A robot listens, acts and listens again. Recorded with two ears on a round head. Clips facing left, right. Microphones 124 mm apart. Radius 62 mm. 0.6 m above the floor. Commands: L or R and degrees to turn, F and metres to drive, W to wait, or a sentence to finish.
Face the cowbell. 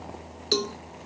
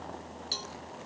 L75
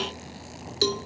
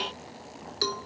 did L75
L30
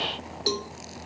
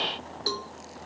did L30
L20
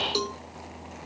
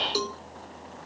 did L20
Facing the cowbell.